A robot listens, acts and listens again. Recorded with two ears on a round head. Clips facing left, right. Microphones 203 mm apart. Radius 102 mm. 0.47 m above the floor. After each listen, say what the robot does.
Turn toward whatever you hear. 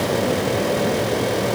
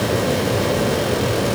Keep listening.
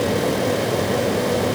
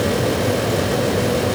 Keep listening.
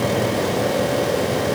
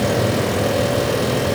I can't make out anything.